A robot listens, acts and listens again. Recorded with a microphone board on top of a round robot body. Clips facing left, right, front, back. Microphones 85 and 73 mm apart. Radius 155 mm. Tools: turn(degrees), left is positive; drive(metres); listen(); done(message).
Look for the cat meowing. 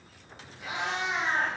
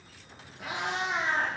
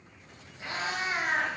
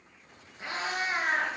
turn(degrees=-125)
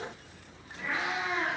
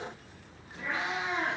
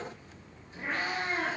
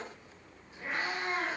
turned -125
turn(degrees=-35)
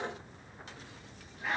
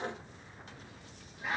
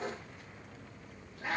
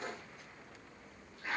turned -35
done("Found it: a cat meowing, straight ahead.")